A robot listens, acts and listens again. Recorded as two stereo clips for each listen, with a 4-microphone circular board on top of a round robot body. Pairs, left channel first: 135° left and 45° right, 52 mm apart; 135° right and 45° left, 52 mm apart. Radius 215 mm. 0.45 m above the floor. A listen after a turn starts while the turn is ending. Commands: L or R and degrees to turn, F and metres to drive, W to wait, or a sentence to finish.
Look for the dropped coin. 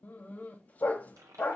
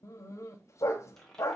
R55
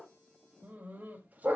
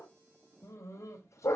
Facing where the dropped coin came from. I can't hear it now.